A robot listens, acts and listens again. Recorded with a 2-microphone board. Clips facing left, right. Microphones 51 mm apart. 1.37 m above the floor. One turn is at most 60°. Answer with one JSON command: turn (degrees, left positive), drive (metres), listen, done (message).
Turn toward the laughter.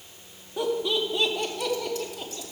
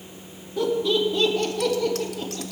{"turn": 30}
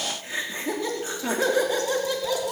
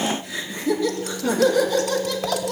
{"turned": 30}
{"turn": 20}
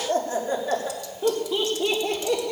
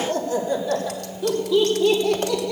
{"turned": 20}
{"turn": 60}
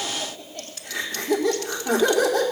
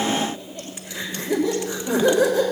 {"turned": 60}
{"turn": 60}
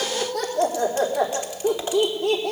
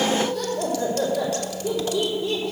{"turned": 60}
{"turn": 60}
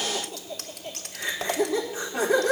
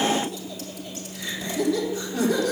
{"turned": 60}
{"turn": 25}
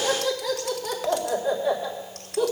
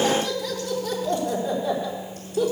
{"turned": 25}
{"done": "Facing the laughter."}